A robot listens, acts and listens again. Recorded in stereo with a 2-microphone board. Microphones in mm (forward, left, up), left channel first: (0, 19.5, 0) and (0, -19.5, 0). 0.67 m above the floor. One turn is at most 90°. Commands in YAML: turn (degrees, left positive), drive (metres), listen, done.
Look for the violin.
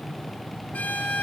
listen: true
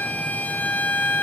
turn: 45
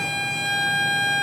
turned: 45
done: "Facing the violin."